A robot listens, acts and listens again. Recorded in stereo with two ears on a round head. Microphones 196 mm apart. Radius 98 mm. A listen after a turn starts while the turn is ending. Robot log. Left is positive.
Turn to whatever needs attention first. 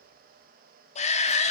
note: The shout: about 30° left or 150° left.
cmd yaw +30
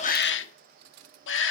note: So it is at 115° left.
cmd yaw +115
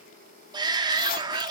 note: The shout is now 20° right.
cmd yaw -20
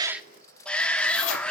end: Facing the shout, 1 to 2 m away.